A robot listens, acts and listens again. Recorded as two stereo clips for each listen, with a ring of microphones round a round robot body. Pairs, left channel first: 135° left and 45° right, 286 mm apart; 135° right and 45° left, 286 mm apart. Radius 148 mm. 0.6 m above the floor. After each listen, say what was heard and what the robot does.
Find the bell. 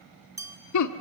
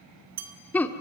The bell: 35° left. Turn 35° left.
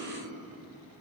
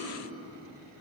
Keep listening.
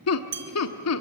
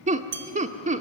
Found it: a bell, straight ahead, 2 to 4 m away.